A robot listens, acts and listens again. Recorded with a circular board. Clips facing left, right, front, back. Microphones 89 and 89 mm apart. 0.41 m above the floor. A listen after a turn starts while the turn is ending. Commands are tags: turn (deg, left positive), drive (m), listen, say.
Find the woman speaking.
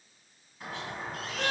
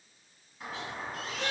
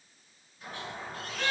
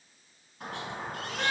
<listen/>
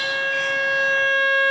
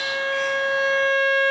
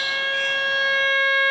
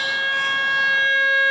<listen/>
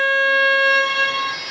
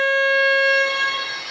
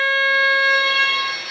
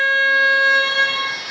<say>I can't make out a woman speaking, only a squeak and a violin.</say>